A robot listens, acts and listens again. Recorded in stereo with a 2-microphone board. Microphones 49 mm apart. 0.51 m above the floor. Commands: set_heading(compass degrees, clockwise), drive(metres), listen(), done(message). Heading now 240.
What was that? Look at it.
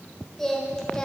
set_heading(225)
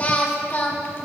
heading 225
set_heading(90)
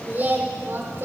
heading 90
set_heading(140)
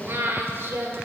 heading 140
set_heading(195)
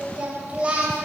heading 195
set_heading(220)
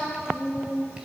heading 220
set_heading(235)
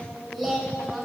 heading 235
done("Found it: singing, straight ahead, 2 to 4 m away.")